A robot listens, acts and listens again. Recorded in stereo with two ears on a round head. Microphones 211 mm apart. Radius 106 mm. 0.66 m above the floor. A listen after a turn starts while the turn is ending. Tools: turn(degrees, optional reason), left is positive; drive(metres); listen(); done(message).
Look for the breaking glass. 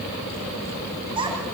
listen()
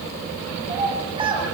listen()
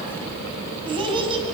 done("I can't make out breaking glass, only a child speaking.")